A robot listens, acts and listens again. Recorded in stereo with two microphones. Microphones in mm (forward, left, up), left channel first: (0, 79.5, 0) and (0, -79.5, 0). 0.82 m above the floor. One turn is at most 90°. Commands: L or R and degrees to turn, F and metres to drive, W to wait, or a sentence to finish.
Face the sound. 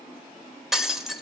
L30
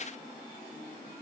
W
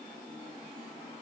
I heard breaking glass, but can't make it out now. It was about 30° right or 150° left.